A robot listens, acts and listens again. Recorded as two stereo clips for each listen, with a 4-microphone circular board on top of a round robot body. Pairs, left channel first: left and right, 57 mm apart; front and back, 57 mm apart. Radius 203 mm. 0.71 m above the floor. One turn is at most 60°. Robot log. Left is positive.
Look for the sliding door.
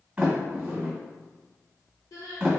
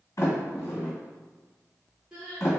note: The sliding door: 25° right.
cmd yaw -25
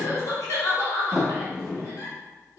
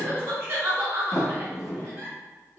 end: Found it: a sliding door, straight ahead.